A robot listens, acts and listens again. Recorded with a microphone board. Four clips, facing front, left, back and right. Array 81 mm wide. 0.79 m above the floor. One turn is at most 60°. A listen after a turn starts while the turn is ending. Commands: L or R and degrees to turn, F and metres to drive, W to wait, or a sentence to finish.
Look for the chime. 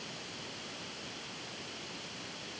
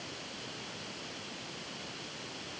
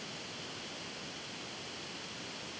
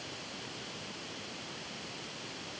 W
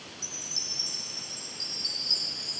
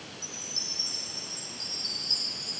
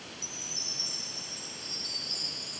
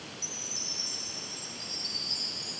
R60
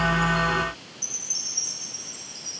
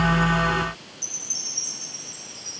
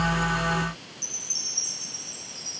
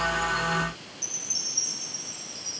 Found it: a chime, straight ahead, over 4 m away.